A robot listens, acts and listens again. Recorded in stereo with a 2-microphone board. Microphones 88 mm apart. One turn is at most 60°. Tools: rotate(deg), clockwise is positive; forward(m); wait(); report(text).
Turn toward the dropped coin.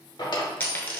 rotate(-20)
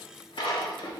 wait()
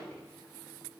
report("I heard a dropped coin, but can't make it out now. It was about straight ahead or 140° left.")